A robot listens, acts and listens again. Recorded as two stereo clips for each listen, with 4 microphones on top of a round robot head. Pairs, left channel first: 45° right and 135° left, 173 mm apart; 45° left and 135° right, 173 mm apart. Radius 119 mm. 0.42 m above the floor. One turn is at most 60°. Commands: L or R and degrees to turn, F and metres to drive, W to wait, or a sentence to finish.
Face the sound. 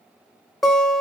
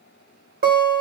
R60
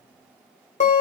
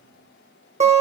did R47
R60
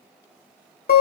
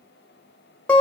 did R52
R35
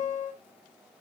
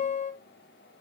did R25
R10
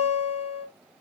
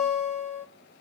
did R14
Found it: a guitar, straight ahead.